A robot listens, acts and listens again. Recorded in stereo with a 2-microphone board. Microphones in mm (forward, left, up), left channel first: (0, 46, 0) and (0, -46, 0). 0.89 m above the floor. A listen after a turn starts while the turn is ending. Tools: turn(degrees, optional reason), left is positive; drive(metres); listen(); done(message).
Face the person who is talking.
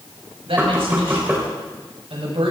turn(degrees=-90)
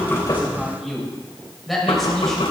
done("Facing the man speaking, over 4 m away.")